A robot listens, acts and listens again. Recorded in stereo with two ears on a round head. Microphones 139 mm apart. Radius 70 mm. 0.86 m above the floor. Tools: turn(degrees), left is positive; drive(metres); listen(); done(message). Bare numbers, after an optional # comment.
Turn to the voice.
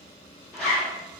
listen()
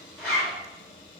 listen()
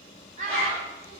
# The child speaking: about 50° right or 130° right.
turn(-50)
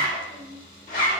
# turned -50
# So it is at 85° right.
turn(-85)
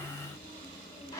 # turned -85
listen()
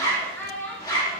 # The child speaking is now 10° left.
turn(10)
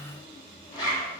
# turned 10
listen()
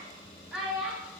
done("Facing the child speaking, under 1 m away.")